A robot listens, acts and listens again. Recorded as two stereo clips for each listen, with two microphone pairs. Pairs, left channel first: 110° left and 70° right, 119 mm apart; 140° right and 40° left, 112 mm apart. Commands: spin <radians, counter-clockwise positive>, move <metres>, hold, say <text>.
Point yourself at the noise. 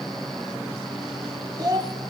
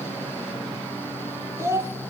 spin -0.26
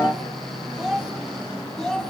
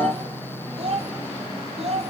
spin 0.52
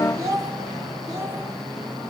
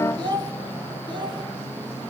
say Found it: a child speaking, straight ahead, 2 to 4 m away.